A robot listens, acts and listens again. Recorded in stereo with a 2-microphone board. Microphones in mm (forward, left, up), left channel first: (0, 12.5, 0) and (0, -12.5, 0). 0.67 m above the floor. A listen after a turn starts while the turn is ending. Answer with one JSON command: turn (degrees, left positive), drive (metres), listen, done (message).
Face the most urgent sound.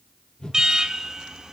{"turn": -30}
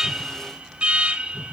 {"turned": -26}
{"turn": -125}
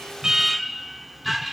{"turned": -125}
{"done": "Found it: an alarm, straight ahead."}